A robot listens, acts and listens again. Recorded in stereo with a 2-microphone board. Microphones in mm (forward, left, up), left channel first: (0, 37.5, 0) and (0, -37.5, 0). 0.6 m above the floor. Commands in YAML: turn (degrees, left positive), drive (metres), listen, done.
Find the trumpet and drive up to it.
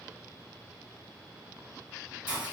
listen: true
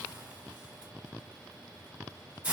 listen: true
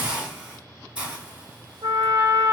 turn: -60
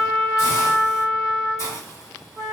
turn: -10
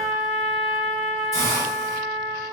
drive: 1.0
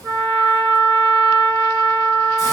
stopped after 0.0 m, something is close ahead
done: "Something is in my way. I am facing the trumpet but have not reached it."